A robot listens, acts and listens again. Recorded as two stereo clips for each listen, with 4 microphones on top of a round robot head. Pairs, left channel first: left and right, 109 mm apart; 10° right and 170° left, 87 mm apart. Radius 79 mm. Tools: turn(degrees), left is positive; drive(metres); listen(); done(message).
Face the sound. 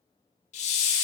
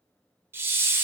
turn(degrees=110)
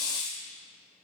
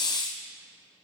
turn(degrees=30)
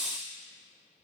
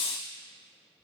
done("Facing the hiss.")